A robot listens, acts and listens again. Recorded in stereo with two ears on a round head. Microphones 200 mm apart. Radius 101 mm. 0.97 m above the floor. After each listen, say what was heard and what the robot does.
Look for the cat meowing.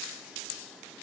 Keep listening.
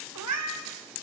The cat meowing: about 70° right or 110° right. Turn 70° right.
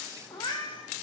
So it is at 25° left. Turn 25° left.
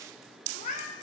The cat meowing is now 35° left. Turn 35° left.
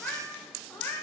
The cat meowing is now 10° left. Turn 10° left.
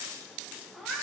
Found it: a cat meowing, straight ahead, 2 to 4 m away.